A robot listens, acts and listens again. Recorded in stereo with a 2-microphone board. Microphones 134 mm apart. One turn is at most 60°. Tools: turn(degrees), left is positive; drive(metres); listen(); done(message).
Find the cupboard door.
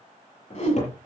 turn(degrees=60)
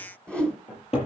turn(degrees=50)
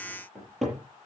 done("Facing the cupboard door, over 4 m away.")